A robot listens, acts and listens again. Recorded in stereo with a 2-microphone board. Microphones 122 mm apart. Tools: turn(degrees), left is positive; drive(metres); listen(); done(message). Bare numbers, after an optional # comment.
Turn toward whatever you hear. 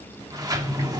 # The sliding door: about 30° right or 150° right.
turn(-30)
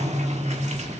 # So it is at 115° right.
turn(-115)
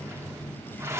# The sliding door is now 20° right.
turn(-20)
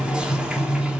# The sliding door is now 10° right.
turn(-10)
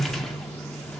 done("Found it: a sliding door, straight ahead.")